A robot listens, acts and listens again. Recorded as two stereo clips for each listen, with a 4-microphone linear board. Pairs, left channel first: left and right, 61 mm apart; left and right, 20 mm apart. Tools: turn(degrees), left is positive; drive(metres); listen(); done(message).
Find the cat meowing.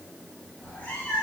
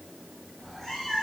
turn(degrees=25)
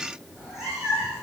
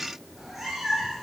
turn(degrees=-10)
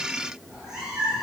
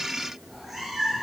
turn(degrees=-15)
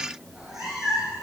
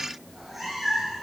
turn(degrees=-10)
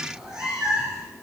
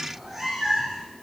turn(degrees=-15)
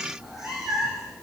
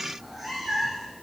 done("Facing the cat meowing, 2 to 4 m away.")